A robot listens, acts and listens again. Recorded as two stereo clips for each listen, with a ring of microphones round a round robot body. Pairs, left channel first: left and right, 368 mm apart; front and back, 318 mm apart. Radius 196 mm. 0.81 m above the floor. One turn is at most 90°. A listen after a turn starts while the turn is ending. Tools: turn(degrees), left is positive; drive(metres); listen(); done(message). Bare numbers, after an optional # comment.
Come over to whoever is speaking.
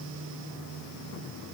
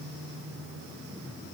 listen()
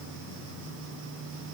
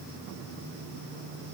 listen()
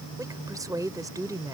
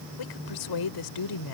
# The woman speaking: 10° right.
turn(-10)
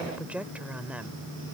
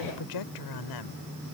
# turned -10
drive(1.0)
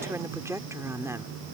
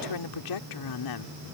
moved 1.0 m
drive(1.0)
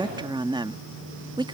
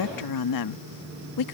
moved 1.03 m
# The woman speaking is now 15° right.
turn(-15)
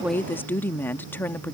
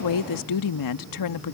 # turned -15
drive(1.0)
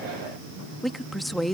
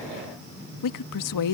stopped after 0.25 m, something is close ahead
done("I am next to the woman speaking.")